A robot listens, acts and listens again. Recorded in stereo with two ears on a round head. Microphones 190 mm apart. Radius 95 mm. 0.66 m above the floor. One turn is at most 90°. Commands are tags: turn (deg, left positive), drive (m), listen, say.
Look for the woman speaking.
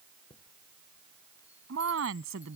<turn deg="-70"/>
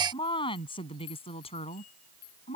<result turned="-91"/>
<turn deg="30"/>
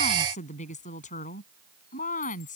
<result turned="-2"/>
<turn deg="40"/>
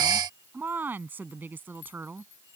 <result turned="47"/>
<turn deg="-10"/>
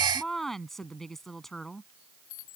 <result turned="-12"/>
<say>Found it: a woman speaking, straight ahead.</say>